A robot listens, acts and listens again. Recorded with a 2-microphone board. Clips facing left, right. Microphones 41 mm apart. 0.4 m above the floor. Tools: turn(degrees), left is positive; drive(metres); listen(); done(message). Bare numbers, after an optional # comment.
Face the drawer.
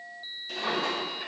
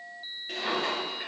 # The drawer: about 35° right or 145° right.
turn(-35)
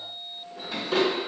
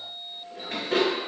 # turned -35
# So it is at 110° right.
turn(-110)
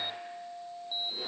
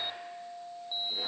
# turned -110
listen()
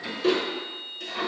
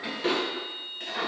# The drawer is now 35° right.
turn(-35)
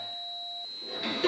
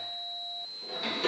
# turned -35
# The drawer is now 10° left.
turn(10)
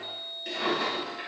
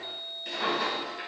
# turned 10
done("Found it: a drawer, straight ahead, 1 to 2 m away.")